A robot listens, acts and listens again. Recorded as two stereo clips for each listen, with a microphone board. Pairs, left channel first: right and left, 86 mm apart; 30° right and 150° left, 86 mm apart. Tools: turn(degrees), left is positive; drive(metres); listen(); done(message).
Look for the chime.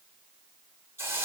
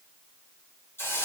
listen()
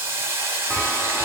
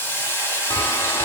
done("Facing the chime.")